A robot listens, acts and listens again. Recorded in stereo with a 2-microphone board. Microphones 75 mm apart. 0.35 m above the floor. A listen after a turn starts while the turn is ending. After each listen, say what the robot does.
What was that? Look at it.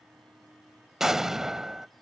Turn 30° right.
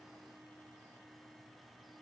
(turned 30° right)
Keep listening.
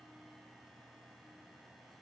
I heard an explosion, but can't make it out now. It was about 25° left or 145° right.